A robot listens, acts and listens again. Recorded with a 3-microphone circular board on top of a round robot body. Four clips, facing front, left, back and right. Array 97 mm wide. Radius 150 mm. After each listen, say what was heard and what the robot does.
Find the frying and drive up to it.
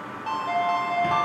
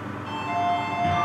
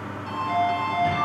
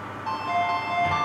Keep listening.
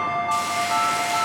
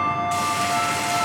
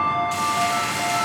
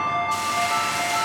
The frying: 85° left. Turn 85° left.
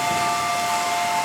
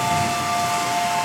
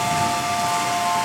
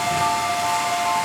The frying is now 25° left. Turn 25° left.
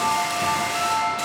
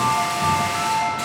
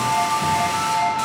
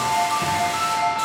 Drive 1.0 m forward.
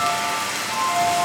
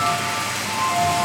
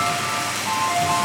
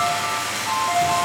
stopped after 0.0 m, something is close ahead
Blocked. The frying is further on, straight ahead.